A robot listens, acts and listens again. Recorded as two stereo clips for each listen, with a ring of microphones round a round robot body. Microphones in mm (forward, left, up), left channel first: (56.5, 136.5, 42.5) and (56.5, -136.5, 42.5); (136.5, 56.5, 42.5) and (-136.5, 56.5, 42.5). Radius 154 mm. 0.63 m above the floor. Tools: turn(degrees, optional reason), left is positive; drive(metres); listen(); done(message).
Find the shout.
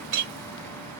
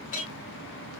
listen()
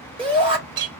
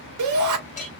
turn(degrees=-165, reason="The shout: 165° right.")
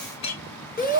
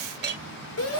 turn(degrees=30, reason="The shout is now 30° left.")
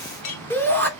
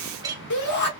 turn(degrees=10, reason="The shout is now 10° left.")
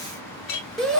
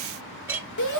done("Found it: a shout, straight ahead.")